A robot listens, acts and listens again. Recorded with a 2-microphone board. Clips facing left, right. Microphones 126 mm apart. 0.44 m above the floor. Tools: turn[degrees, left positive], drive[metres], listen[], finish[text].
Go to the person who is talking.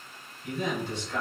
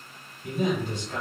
Thought: The man speaking: about 55° right or 125° right.
Action: turn[-55]
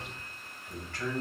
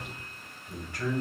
Thought: So it is at 15° right.
Action: turn[-15]
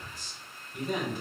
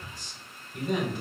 Action: drive[1.0]
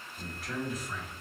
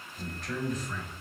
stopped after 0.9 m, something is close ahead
Action: finish[I am next to the man speaking.]